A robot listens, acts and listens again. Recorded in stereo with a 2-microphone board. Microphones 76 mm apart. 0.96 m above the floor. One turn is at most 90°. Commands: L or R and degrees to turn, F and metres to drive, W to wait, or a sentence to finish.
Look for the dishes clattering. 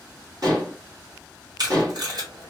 R55
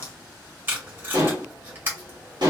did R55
R75
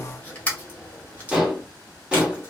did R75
R15
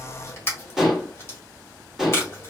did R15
Facing the dishes clattering, 1 to 2 m away.